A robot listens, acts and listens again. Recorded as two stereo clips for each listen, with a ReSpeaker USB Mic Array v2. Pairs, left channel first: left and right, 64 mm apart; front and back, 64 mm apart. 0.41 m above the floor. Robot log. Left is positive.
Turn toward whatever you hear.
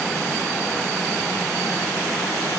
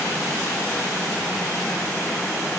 cmd idle
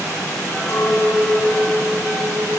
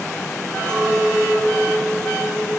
note: The clink: 80° left.
cmd yaw +80
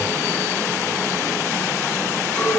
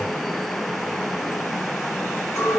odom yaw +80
note: The clink is now 25° left.
cmd yaw +25
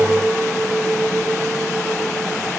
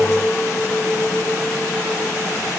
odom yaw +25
note: The clink is now 10° right.
cmd yaw -10
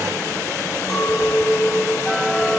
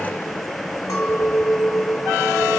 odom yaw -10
end: Facing the clink, 1 to 2 m away.